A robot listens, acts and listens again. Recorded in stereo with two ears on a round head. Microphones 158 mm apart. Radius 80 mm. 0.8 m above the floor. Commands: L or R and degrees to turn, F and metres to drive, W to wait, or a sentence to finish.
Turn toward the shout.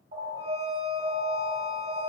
W
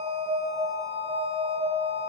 W
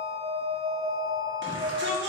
R70
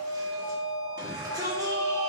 R20
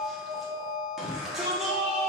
Facing the shout, 1 to 2 m away.